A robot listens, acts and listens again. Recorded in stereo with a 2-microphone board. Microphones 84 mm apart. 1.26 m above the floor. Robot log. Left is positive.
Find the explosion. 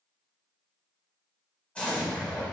cmd yaw +30
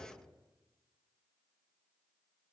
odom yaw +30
cmd idle
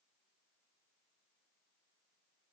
end: I heard an explosion, but can't make it out now. It was about 15° right or 135° left.